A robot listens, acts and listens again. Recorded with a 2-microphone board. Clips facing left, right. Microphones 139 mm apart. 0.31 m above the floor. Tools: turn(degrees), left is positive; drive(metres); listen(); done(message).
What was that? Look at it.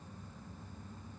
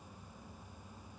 listen()
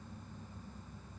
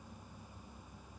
listen()
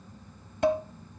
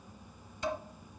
turn(degrees=55)
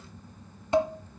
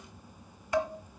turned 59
turn(degrees=30)
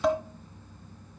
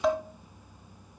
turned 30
done("Facing the dishes clattering, 1 to 2 m away.")